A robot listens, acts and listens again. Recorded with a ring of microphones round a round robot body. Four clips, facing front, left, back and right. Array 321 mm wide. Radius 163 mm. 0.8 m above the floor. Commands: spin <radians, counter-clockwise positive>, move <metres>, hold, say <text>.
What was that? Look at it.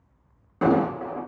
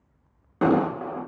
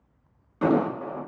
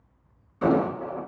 spin 1.22
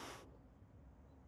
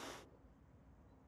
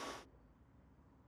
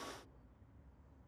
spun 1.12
say I heard an explosion from this way, but can't make it out now.